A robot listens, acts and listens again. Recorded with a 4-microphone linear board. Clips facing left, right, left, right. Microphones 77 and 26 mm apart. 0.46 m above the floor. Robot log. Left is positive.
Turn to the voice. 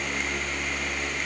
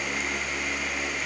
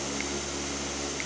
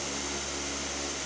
cmd idle
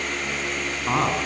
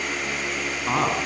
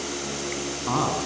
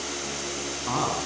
cmd yaw +30
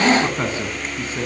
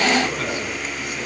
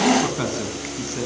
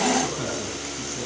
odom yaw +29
note: So it is at 150° left.
cmd yaw +150
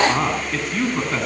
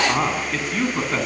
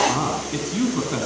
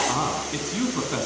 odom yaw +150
end: Facing the man speaking.